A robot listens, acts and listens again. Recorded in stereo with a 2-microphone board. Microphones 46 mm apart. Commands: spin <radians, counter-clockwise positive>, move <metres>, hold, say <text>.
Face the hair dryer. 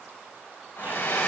spin 1.13
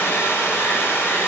spin 0.87
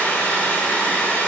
spin 0.44
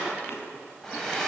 say Found it: a hair dryer, straight ahead.